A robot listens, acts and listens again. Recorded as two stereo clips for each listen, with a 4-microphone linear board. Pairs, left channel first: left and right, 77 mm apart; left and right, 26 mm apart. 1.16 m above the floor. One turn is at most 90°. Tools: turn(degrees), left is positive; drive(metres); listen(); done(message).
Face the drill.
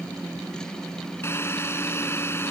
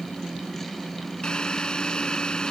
turn(degrees=30)
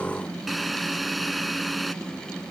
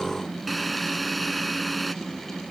done("Facing the drill.")